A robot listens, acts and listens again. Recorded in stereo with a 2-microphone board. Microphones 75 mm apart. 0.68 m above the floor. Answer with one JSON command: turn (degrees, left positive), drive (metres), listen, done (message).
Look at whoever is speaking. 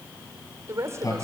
{"turn": -40}
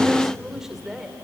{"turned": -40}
{"done": "Facing the woman speaking."}